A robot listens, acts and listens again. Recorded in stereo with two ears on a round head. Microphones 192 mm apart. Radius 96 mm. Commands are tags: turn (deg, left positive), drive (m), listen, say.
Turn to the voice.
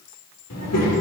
<turn deg="90"/>
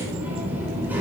<turn deg="-10"/>
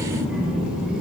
<say>Found it: a child speaking, straight ahead, over 4 m away.</say>